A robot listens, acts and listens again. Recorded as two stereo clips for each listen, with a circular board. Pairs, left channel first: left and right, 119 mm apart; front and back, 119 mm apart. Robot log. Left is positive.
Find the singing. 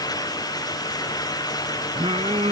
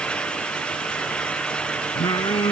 note: The singing: 55° right.
cmd yaw -55
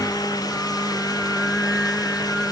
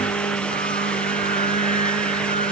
end: Facing the singing.